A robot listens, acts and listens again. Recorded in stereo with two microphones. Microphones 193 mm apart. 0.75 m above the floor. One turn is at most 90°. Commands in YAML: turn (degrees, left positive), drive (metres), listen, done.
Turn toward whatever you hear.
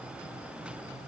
listen: true
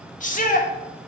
turn: 40
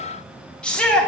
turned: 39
done: "Facing the shout."